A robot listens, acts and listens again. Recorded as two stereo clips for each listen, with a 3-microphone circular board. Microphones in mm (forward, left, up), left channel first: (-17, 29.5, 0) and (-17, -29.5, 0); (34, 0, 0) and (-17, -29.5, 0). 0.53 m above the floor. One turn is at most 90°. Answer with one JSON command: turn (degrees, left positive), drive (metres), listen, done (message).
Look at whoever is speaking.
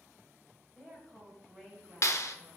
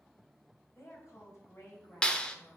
{"done": "Found it: a woman speaking, straight ahead, 2 to 4 m away."}